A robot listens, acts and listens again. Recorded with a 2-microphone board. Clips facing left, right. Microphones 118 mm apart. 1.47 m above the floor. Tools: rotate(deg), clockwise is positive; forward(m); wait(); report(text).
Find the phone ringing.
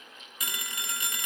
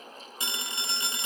rotate(25)
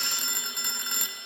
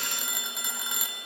report("Facing the phone ringing.")